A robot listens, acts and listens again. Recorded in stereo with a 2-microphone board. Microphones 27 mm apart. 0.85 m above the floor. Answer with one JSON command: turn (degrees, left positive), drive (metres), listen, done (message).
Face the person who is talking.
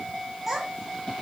{"turn": -30}
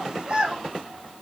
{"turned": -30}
{"turn": -125}
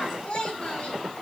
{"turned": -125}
{"turn": 40}
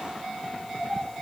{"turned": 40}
{"turn": 15}
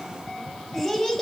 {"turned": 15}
{"done": "Found it: a child speaking, straight ahead."}